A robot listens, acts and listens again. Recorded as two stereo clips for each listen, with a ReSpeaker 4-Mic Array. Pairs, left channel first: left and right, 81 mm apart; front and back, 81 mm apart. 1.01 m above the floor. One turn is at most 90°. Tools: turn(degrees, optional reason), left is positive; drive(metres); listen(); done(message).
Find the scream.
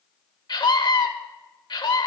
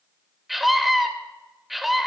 turn(degrees=90, reason="The scream: 90° left.")
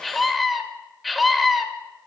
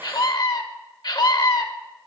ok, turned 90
done("Found it: a scream, straight ahead.")